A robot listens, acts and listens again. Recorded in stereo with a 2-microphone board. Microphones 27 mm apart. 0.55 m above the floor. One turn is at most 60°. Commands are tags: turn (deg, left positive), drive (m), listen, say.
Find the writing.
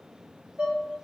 <listen/>
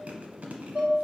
<listen/>
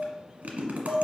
<say>I can't make out writing to turn to.</say>